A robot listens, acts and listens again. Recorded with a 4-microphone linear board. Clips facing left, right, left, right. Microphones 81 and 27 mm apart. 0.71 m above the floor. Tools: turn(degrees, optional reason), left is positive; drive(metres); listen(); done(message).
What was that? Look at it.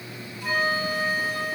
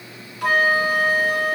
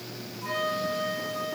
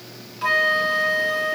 turn(degrees=-90)
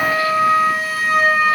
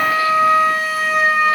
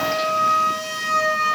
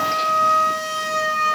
done("Facing the flute, 2 to 4 m away.")